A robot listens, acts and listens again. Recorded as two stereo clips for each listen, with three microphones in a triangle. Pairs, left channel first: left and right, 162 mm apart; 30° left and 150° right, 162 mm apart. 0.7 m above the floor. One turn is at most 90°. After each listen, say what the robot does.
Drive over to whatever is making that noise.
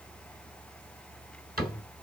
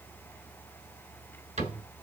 Turn 90° right.
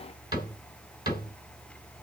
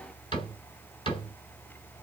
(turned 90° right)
Turn 30° right.
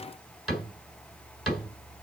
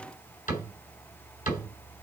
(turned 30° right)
Drive 1.0 m forward.
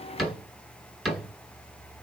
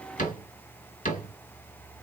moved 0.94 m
Drive 1.0 m forward.
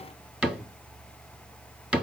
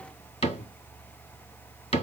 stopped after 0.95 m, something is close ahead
I am next to the cupboard door.